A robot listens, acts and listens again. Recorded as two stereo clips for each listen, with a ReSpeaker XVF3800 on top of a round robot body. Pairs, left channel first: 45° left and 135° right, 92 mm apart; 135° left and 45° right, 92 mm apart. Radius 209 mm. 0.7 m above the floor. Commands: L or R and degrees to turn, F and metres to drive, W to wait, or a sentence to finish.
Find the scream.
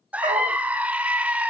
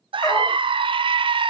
R60
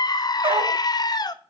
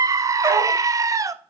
Found it: a scream, straight ahead.